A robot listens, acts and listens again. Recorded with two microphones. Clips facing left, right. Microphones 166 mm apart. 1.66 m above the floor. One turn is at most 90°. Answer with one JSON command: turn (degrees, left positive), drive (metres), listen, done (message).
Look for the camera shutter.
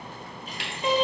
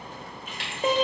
{"turn": -55}
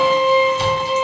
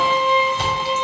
{"listen": true}
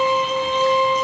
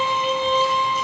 {"listen": true}
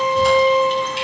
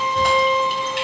{"done": "I heard a camera shutter, but can't make it out now. It was about straight ahead or 70° right."}